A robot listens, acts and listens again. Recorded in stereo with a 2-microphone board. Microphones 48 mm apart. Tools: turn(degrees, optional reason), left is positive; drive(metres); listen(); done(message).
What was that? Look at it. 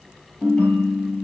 turn(degrees=30, reason="The ringtone: about 30° left or 150° left.")
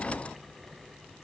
listen()
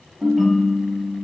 done("Found it: a ringtone, straight ahead, over 4 m away.")